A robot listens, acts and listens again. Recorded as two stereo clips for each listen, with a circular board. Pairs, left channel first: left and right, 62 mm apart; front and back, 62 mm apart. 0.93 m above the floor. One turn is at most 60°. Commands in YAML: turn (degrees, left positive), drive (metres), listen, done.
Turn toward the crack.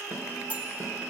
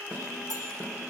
listen: true
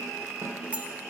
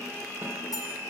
listen: true
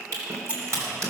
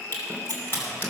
turn: -55
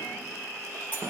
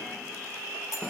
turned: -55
done: "Facing where the crack came from. I can't hear it now."